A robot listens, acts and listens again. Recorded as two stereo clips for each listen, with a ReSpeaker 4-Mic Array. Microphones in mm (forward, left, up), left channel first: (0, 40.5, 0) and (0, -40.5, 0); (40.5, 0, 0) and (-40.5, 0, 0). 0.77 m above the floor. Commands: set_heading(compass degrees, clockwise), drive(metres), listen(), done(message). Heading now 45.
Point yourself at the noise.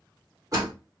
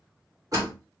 set_heading(180)
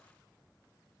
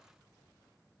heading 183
done("Facing where the door slam came from. I can't hear it now.")